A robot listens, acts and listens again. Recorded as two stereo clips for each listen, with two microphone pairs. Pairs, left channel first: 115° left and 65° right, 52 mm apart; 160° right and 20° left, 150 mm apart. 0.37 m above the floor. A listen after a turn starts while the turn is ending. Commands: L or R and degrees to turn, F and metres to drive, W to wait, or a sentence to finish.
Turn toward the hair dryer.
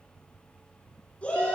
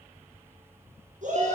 W
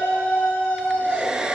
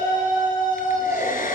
R135
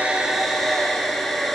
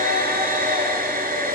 L30
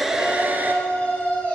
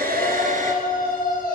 W
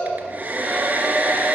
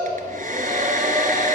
Found it: a hair dryer, straight ahead.